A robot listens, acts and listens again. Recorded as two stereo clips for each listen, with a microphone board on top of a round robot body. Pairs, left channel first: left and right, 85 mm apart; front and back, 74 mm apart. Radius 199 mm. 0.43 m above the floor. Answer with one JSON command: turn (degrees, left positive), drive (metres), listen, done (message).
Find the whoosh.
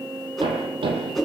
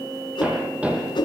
{"done": "Facing the whoosh."}